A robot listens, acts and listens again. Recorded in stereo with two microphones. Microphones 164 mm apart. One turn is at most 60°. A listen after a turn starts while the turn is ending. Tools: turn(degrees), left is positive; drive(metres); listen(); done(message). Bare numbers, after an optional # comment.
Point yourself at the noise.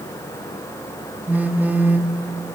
turn(-30)
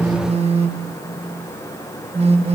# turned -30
# So it is at 140° right.
turn(-60)
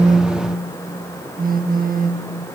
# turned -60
# The phone buzzing is now 115° right.
turn(-60)
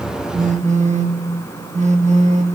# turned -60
# The phone buzzing is now 50° right.
turn(-50)
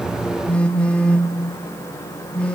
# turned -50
done("Found it: a phone buzzing, straight ahead, 1 to 2 m away.")